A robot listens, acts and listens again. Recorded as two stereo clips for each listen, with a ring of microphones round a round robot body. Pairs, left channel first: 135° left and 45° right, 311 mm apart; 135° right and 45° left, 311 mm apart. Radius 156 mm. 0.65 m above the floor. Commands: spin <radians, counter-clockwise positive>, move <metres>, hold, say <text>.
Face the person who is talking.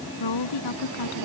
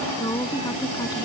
spin 2.53
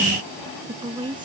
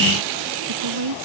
spin 0.52
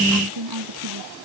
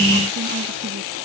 spin -0.17
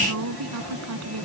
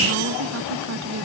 say Found it: a woman speaking, straight ahead.